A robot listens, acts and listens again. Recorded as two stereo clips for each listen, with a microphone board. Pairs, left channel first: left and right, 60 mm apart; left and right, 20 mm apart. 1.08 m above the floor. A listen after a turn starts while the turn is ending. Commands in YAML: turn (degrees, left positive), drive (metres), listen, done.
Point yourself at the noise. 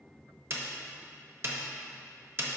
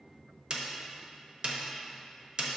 turn: -45
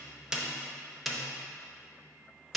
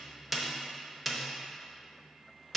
done: "Found it: a snare drum, straight ahead, under 1 m away."